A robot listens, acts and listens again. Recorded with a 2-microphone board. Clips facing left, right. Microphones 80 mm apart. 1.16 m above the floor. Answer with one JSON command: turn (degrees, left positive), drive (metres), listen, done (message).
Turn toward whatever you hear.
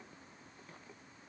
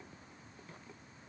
{"listen": true}
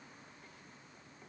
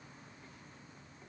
{"listen": true}
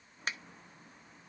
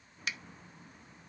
{"turn": 40}
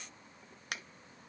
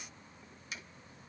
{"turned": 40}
{"turn": 95}
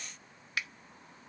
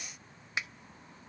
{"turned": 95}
{"turn": -25}
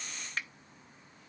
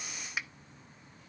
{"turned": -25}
{"turn": -10}
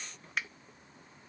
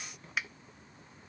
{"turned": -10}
{"done": "Found it: a finger snap, straight ahead, under 1 m away."}